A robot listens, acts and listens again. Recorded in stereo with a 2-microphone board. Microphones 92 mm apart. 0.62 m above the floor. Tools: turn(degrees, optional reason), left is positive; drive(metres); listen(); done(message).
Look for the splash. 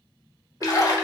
turn(degrees=40, reason="The splash: about 40° left or 140° left.")
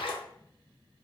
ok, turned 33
turn(degrees=110, reason="So it is at 110° left.")
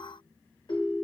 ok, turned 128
turn(degrees=-20, reason="Nothing new. It was at 20° right.")
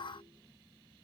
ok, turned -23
done("I heard a splash from this way, but can't make it out now.")